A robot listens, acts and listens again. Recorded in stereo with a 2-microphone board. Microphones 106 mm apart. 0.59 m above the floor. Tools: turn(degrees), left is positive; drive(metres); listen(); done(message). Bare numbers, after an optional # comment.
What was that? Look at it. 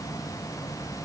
listen()
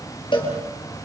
# The cowbell: about 50° left or 130° left.
turn(50)
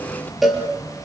done("Facing the cowbell, over 4 m away.")